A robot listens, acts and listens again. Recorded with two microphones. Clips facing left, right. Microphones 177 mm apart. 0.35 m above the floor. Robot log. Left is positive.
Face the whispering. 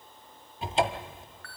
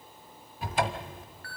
cmd idle
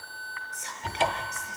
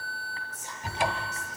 note: The whispering: about 75° left or 105° left.
cmd yaw +75
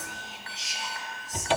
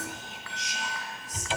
end: Found it: whispering, straight ahead.